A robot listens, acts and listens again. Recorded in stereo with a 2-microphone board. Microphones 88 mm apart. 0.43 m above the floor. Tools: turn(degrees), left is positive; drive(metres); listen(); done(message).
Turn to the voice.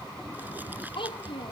turn(degrees=70)
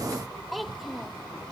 done("Facing the child speaking.")